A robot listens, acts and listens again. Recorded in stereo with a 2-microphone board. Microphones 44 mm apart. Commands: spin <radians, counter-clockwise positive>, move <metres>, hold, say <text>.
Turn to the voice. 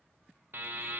hold
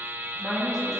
spin -0.52
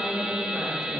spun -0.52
spin -2.79
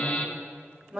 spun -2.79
say Facing the woman speaking.